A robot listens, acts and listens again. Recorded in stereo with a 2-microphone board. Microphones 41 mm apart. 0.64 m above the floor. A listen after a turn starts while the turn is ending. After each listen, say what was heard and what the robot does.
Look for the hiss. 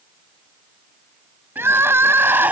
Keep listening.
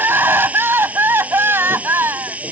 The hiss: about 35° right or 145° right. Turn 35° right.
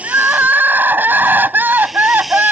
Found it: a hiss, straight ahead.